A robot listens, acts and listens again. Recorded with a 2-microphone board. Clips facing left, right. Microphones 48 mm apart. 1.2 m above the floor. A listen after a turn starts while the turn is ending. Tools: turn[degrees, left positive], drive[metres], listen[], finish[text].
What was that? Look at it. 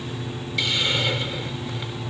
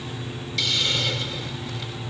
Thought: The hiss: about 20° left or 160° left.
Action: turn[20]
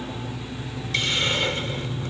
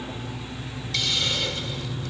Thought: So it is at 140° left.
Action: turn[140]
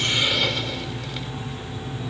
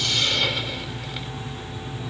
Action: listen[]
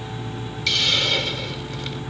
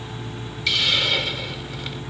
Thought: The hiss is now 10° right.
Action: turn[-10]
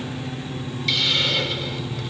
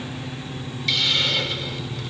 Action: finish[Facing the hiss.]